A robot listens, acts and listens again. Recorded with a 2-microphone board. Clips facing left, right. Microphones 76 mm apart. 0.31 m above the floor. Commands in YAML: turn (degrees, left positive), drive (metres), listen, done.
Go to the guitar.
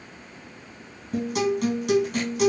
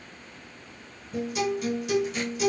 turn: 60
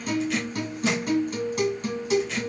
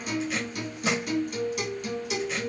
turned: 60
turn: 45
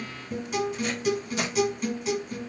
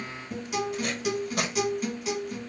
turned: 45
drive: 1.0
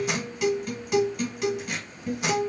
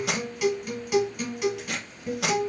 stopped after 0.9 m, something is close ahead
done: "I am next to the guitar."